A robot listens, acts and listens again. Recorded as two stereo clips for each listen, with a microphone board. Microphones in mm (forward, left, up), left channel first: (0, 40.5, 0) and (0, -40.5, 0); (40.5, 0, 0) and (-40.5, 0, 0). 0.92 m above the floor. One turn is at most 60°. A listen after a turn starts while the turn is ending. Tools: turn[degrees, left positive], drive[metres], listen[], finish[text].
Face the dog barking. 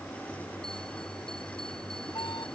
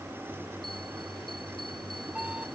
Action: listen[]
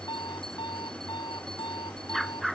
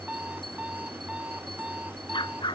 Action: finish[Facing the dog barking.]